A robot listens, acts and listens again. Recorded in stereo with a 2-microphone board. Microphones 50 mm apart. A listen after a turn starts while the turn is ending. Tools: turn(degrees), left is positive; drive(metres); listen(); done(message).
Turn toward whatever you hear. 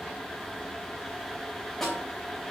turn(degrees=30)
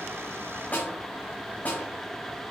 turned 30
turn(degrees=145)
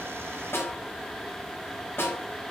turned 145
turn(degrees=55)
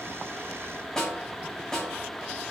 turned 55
turn(degrees=10)
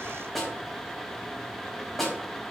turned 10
done("Found it: a snare drum, straight ahead.")